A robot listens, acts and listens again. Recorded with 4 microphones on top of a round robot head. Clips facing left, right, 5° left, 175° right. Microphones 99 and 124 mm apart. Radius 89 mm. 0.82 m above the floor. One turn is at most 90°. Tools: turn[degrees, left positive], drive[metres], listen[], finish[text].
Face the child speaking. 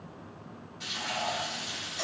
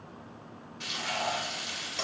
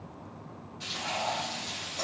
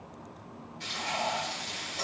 Action: listen[]
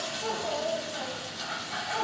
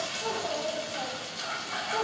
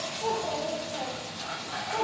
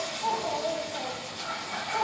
Thought: The child speaking: 45° right.
Action: turn[-45]
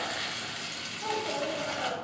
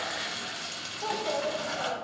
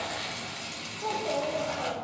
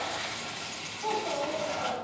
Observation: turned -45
Thought: The child speaking is now 20° right.
Action: turn[-20]
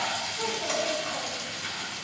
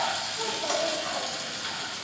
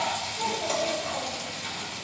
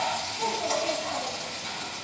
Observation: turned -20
Action: listen[]
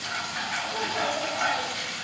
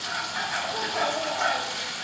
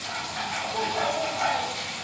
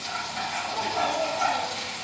Action: listen[]
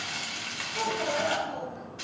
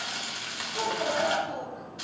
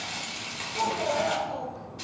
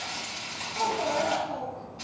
Thought: The child speaking is now 10° right.
Action: turn[-10]
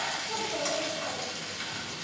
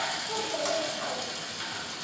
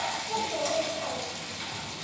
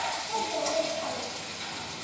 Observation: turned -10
Action: finish[Facing the child speaking, over 4 m away.]